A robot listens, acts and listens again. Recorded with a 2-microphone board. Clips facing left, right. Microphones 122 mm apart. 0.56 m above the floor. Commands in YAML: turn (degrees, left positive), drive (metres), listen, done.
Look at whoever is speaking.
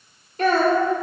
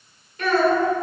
turn: 35
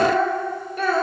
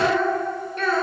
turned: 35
done: "Facing the child speaking, 1 to 2 m away."